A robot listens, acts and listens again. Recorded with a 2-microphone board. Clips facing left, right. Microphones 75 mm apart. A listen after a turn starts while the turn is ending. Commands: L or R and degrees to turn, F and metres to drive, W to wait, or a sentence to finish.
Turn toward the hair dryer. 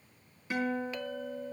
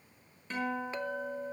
W
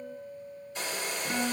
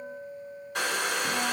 R70
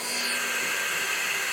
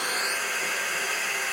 Facing the hair dryer, 1 to 2 m away.